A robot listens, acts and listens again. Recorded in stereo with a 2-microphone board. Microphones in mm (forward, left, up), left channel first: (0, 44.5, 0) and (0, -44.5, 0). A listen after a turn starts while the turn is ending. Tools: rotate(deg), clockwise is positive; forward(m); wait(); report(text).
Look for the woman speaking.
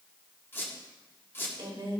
rotate(70)
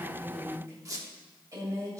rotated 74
rotate(40)
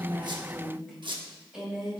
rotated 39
rotate(10)
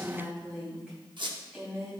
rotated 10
report("Facing the woman speaking.")